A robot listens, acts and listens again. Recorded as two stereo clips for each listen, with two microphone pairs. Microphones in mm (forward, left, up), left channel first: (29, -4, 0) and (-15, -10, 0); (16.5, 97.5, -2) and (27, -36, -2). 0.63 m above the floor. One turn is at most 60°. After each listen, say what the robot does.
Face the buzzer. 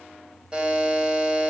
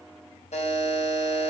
Turn 60° left.
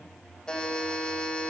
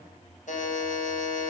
Turn 60° left.
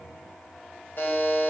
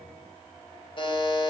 Turn 45° left.
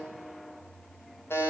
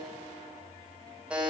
Facing the buzzer.